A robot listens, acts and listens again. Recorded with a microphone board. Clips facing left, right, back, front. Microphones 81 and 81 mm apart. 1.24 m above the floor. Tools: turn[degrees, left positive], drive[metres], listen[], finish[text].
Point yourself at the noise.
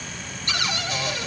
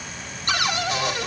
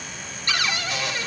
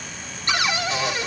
Thought: The cupboard door: 65° right.
Action: turn[-65]
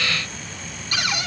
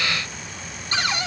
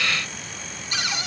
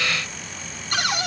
Thought: The cupboard door is now 30° right.
Action: turn[-30]
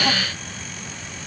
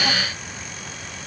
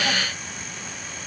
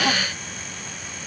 Action: listen[]
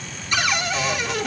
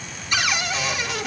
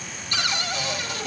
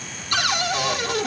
Action: finish[Found it: a cupboard door, straight ahead, 1 to 2 m away.]